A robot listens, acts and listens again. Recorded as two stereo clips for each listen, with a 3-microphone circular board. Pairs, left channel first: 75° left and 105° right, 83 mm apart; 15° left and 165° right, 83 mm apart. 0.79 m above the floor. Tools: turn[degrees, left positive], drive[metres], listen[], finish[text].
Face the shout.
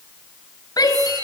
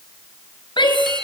Thought: The shout: 35° left.
Action: turn[35]
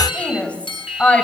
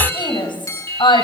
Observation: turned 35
Action: finish[Facing the shout.]